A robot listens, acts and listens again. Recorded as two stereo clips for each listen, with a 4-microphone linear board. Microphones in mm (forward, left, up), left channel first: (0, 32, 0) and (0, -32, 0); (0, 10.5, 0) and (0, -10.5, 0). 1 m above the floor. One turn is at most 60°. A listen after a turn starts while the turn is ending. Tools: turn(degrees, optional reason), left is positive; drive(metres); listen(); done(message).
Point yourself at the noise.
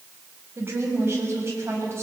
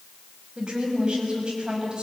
turn(degrees=-45, reason="The woman speaking: about 45° right or 135° right.")
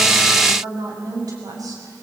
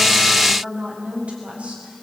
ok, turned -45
turn(degrees=-60, reason="So it is at 95° right.")
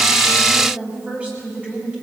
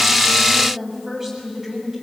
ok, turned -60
turn(degrees=-20, reason="The woman speaking is now 20° right.")
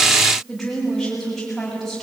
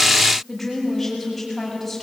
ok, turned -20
done("Found it: a woman speaking, straight ahead.")